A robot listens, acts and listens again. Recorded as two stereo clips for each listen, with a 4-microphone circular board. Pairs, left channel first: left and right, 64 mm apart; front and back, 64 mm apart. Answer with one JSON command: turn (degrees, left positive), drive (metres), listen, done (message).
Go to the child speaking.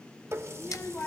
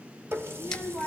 {"turn": 135}
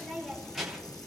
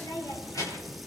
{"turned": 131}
{"drive": 1.0}
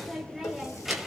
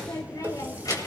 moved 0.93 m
{"drive": 1.0}
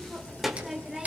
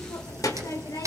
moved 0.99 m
{"drive": 1.0}
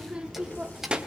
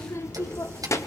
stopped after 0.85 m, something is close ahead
{"turn": -20}
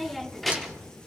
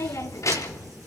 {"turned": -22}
{"done": "I am next to the child speaking."}